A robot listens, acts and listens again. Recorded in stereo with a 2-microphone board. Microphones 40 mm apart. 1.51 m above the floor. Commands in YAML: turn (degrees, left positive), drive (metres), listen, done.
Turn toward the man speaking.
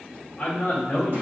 turn: 30
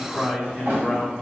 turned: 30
turn: -20
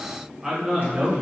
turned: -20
turn: -30
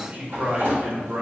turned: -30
turn: -55
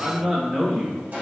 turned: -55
turn: -20
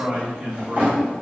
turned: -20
turn: -15
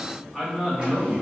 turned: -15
done: "Found it: a man speaking, straight ahead."